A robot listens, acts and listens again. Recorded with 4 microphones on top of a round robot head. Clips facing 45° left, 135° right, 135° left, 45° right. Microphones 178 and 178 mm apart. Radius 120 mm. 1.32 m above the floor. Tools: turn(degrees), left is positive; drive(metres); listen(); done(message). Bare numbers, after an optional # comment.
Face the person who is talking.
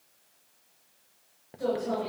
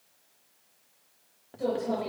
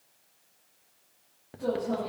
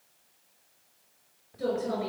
# The woman speaking: 55° right.
turn(-55)
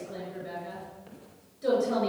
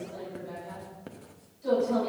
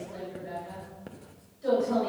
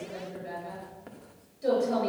# The woman speaking is now 20° left.
turn(20)
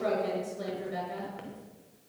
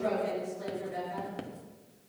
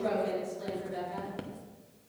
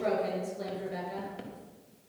done("Found it: a woman speaking, straight ahead.")